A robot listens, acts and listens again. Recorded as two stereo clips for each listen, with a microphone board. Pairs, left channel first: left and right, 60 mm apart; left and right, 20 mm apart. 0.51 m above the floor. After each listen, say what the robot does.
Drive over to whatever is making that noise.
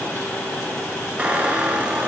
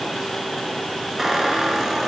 Turn 20° right.
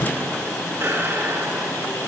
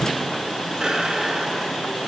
Turn 135° right.
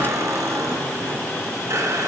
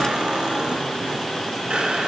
Turn 60° right.
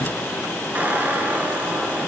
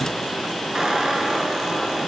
Turn 30° right.
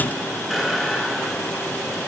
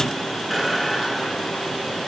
Drive 1.0 m forward.
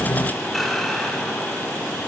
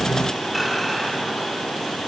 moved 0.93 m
Drive 1.0 m forward.
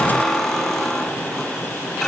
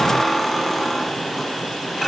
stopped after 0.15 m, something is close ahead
Blocked. The squeak is further on, straight ahead.